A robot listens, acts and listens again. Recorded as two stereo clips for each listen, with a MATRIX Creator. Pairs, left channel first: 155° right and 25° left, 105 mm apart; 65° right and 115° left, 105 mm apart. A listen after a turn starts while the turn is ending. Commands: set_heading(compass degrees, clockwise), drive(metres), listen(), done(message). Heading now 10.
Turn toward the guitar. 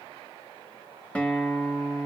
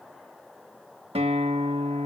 set_heading(245)
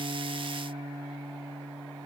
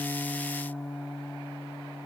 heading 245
done("Facing the guitar, 1 to 2 m away.")